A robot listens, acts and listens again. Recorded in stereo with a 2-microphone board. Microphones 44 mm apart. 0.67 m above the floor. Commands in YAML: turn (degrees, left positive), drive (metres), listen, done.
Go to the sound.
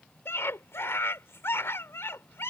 turn: 70
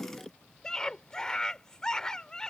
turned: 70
turn: 15
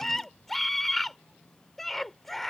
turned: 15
drive: 1.0
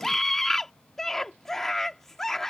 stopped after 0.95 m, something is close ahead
turn: 10
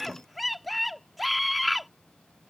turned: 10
done: "Arrived at the scream, straight ahead."